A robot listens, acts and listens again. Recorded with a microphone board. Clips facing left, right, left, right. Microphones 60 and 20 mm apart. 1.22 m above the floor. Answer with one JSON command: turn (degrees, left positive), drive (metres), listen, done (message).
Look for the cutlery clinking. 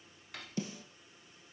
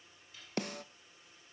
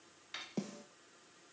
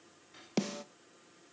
{"turn": 65}
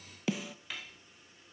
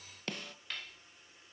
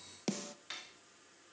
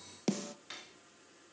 {"done": "Facing the cutlery clinking."}